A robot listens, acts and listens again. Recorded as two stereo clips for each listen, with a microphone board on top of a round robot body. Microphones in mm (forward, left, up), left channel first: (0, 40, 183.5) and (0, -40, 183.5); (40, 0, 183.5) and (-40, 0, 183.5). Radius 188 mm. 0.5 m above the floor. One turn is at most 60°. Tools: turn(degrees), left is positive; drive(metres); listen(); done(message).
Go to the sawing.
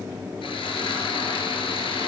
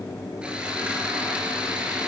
turn(degrees=60)
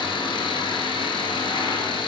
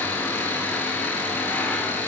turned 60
turn(degrees=60)
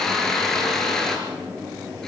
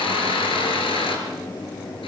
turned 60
drive(metres=1.0)
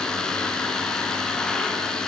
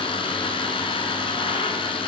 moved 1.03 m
turn(degrees=10)
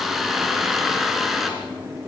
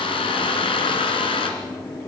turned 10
drive(metres=1.0)
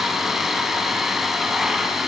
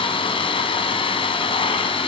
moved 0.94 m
drive(metres=1.0)
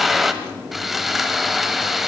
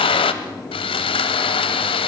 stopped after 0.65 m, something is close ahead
done("Arrived at the sawing, straight ahead.")